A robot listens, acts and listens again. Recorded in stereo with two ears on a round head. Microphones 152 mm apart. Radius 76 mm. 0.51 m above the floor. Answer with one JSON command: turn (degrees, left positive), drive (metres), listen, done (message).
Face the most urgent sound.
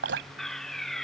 {"turn": 30}
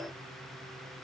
{"listen": true}
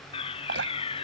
{"turn": 145}
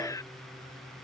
{"turn": 20}
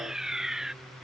{"done": "Found it: a fire alarm, straight ahead."}